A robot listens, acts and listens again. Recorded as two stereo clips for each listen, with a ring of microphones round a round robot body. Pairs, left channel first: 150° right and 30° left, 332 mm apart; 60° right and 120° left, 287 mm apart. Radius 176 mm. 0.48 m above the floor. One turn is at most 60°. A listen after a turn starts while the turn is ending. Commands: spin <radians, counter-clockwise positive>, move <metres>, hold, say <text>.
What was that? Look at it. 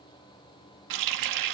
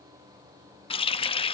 spin 0.17
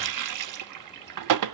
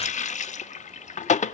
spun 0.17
say Facing the running tap.